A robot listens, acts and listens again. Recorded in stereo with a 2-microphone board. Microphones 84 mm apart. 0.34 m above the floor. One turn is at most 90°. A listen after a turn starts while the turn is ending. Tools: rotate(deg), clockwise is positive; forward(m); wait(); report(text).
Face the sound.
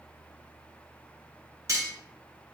rotate(40)
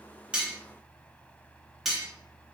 report("Found it: cutlery clinking, straight ahead, 1 to 2 m away.")